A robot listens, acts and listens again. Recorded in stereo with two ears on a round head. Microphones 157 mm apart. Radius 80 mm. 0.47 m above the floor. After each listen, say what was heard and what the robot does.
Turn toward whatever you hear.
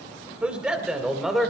Turn 30° left.
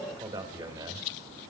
So it is at 20° right. Turn 20° right.
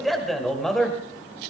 Found it: a man speaking, straight ahead.